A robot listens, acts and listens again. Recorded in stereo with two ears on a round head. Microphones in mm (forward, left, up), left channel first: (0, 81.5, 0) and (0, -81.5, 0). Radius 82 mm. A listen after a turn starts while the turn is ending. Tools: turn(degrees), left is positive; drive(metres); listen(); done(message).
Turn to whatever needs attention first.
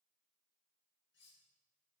listen()
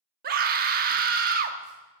turn(degrees=-55)
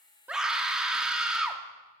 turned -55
done("Found it: a scream, straight ahead, 1 to 2 m away.")